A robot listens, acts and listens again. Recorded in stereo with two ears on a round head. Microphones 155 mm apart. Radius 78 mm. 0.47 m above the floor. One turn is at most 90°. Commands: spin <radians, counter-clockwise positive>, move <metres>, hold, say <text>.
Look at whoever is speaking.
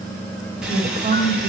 spin -0.61
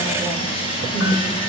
say Found it: a woman speaking, straight ahead, 2 to 4 m away.